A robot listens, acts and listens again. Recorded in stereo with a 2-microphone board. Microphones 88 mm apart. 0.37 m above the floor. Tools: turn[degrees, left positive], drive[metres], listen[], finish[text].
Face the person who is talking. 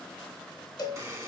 Action: listen[]
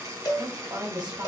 Thought: The woman speaking: about 55° right or 125° right.
Action: turn[-55]
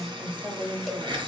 Thought: So it is at 15° right.
Action: turn[-15]
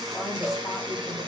Action: listen[]
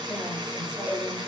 Action: listen[]
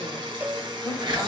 Action: finish[Facing where the woman speaking came from. I can't hear it now.]